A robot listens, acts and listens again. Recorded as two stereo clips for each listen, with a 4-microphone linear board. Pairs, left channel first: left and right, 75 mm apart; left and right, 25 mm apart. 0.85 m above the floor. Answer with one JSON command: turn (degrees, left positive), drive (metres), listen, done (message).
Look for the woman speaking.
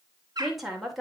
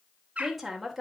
{"turn": 30}
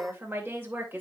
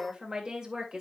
{"turn": -25}
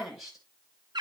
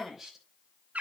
{"done": "Facing the woman speaking, 2 to 4 m away."}